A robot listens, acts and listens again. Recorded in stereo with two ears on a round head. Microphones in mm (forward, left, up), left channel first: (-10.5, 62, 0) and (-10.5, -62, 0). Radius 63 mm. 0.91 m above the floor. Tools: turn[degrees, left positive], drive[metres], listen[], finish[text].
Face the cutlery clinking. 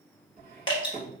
Thought: The cutlery clinking: about 40° right or 140° right.
Action: turn[-40]
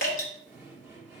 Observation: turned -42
Action: finish[Found it: cutlery clinking, straight ahead, 1 to 2 m away.]